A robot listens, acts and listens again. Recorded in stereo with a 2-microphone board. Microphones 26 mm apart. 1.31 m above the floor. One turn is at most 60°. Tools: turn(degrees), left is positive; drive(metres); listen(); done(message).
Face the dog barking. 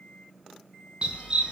turn(degrees=-30)
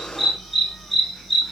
turn(degrees=10)
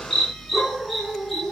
turn(degrees=10)
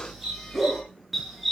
done("Facing the dog barking.")